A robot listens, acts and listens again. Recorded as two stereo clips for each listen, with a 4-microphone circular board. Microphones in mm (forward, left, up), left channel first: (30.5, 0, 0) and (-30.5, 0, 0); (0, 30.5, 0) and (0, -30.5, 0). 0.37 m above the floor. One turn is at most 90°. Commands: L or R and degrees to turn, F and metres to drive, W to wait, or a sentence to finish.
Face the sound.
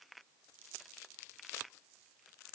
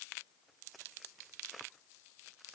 W
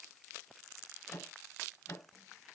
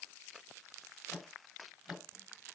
Found it: a microwave, straight ahead.